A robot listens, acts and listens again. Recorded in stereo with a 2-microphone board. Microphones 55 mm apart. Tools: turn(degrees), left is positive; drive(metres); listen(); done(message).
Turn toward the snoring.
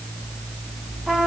listen()
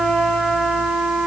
listen()
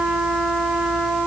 done("I can't make out snoring to turn to.")